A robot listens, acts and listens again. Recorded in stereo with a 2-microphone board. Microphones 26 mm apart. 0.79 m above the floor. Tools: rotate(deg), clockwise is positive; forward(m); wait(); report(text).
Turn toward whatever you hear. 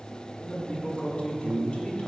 rotate(-40)
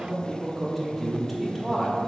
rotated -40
report("Facing the man speaking.")